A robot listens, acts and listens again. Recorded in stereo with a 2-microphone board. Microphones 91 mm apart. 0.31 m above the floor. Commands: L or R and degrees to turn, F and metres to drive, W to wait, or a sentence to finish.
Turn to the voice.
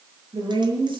R60
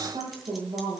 R55
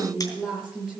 Found it: a woman speaking, straight ahead.